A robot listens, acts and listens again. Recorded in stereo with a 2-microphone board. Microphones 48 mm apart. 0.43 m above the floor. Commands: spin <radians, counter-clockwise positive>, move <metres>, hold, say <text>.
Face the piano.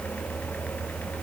hold
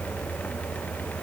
hold
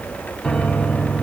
spin 0.52
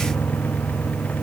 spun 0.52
spin 2.44
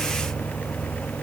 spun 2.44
hold
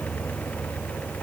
hold
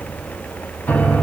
spin 0.61
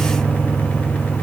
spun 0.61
spin -0.26
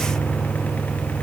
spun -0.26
say Facing the piano, 2 to 4 m away.